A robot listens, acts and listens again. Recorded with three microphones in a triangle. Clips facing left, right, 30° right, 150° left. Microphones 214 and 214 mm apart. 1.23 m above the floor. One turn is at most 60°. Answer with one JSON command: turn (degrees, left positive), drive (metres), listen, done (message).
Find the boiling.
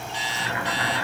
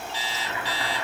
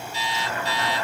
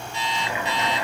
{"turn": 60}
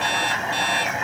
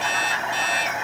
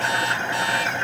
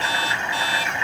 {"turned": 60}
{"done": "Found it: boiling, straight ahead."}